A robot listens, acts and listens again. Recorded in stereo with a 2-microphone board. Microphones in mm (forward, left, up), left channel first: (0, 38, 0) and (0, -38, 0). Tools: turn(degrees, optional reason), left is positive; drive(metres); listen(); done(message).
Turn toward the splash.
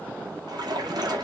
turn(degrees=-70, reason="The splash: about 70° right or 110° right.")
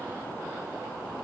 listen()
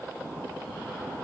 done("I heard a splash, but can't make it out now. It was about straight ahead or 40° right.")